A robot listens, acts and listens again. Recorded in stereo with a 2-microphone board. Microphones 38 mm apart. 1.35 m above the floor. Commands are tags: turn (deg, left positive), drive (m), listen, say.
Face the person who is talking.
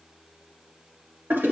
<listen/>
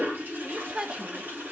<turn deg="-25"/>
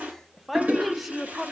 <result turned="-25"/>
<say>Found it: a woman speaking, straight ahead, under 1 m away.</say>